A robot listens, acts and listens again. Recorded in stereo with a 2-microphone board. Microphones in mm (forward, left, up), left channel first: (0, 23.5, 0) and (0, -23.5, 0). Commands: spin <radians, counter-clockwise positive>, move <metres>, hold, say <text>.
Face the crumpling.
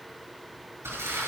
spin -1.57
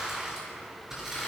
spin -0.17
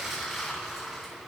say Found it: crumpling, straight ahead.